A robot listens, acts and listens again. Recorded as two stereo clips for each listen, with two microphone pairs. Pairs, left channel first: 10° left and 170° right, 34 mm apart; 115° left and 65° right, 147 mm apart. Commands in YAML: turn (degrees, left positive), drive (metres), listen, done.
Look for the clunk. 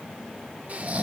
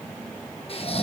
listen: true
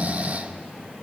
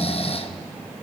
listen: true
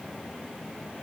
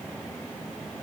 done: "I can't make out a clunk to turn to."